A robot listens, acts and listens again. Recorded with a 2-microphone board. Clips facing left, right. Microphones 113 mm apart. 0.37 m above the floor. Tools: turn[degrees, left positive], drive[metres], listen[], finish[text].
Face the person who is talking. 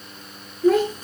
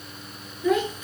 Thought: The child speaking: about 40° left or 140° left.
Action: turn[40]
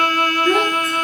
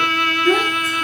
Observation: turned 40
Action: finish[Found it: a child speaking, straight ahead.]